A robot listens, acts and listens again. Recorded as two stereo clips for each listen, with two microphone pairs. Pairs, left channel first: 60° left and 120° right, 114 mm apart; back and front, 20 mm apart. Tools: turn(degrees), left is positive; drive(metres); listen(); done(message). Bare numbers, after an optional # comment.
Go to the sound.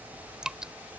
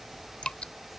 # The dripping: 155° left.
turn(155)
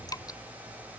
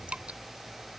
drive(1.0)
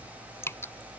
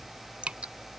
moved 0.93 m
# The dripping is now 10° right.
turn(-10)
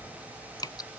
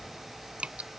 drive(1.0)
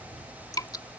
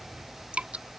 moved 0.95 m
drive(1.0)
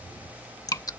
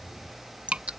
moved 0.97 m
drive(1.0)
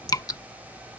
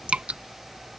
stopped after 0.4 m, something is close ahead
done("I am next to the dripping.")